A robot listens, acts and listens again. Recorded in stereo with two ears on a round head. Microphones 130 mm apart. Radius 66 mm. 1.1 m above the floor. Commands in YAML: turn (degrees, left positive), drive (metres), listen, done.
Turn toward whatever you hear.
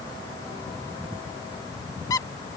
turn: 25
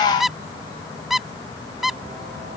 done: "Facing the squeak."